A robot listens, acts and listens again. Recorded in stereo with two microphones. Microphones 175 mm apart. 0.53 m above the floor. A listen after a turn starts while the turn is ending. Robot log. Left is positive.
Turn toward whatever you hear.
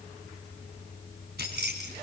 note: The keys jangling: about 65° right or 115° right.
cmd yaw -65
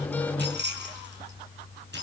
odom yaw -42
note: So it is at 75° right.
cmd yaw -75
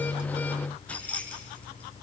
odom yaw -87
note: The keys jangling is now 10° left.
cmd yaw +10
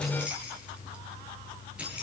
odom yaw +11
end: Found it: keys jangling, straight ahead, over 4 m away.